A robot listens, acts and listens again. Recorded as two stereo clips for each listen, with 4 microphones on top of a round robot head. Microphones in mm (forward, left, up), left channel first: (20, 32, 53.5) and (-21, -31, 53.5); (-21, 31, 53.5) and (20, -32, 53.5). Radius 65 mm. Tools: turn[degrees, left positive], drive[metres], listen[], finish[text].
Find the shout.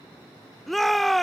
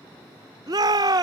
Thought: The shout: 30° right.
Action: turn[-30]
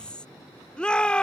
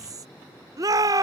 Thought: The shout is now 20° right.
Action: turn[-20]
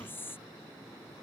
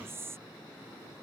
Action: listen[]
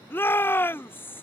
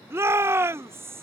Action: finish[Facing the shout.]